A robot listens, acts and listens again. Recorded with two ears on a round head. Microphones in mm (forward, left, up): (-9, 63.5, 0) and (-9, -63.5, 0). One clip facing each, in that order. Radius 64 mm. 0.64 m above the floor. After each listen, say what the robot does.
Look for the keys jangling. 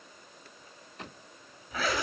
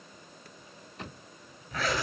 Keep listening.
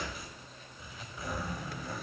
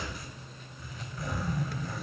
Keep listening.
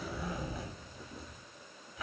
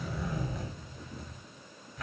I can't make out keys jangling to turn to.